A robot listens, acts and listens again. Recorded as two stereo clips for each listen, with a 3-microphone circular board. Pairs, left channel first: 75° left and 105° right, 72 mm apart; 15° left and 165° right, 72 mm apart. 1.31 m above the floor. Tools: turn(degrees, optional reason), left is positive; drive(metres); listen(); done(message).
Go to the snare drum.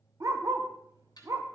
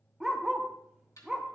turn(degrees=55, reason="The snare drum: 55° left.")
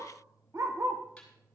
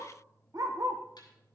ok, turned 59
listen()
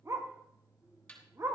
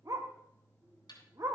drive(metres=1.0)
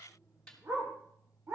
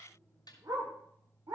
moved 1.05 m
drive(metres=1.0)
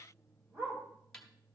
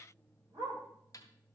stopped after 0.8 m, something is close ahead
done("I am next to the snare drum.")